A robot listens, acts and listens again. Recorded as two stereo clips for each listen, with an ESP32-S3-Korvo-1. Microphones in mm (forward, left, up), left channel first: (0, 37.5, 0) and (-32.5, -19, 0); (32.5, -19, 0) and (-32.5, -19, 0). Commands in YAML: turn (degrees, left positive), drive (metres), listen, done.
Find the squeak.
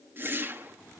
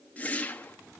listen: true
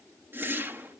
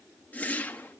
listen: true
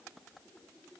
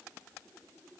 done: "I can't make out a squeak to turn to."